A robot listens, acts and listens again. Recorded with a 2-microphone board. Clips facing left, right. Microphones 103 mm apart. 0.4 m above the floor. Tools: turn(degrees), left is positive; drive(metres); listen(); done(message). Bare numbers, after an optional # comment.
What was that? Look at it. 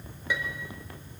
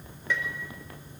turn(30)
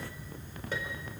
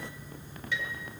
# So it is at 135° left.
turn(135)
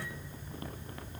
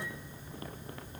listen()
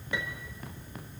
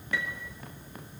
# The piano is now 15° left.
turn(15)
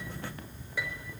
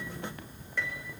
done("Found it: a piano, straight ahead.")